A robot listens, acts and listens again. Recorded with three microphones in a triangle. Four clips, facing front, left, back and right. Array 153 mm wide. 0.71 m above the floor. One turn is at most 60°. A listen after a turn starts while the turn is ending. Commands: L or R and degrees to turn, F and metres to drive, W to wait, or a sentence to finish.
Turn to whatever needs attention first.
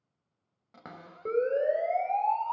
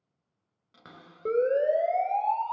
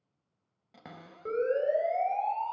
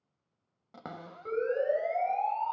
L60
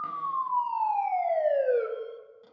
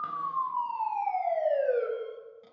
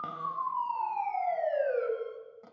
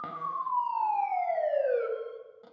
Found it: a siren, straight ahead.